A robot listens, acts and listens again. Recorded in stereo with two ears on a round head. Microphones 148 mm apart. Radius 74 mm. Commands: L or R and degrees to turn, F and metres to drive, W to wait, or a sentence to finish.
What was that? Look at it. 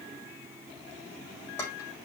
L15
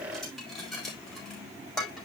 Found it: dishes clattering, straight ahead, over 4 m away.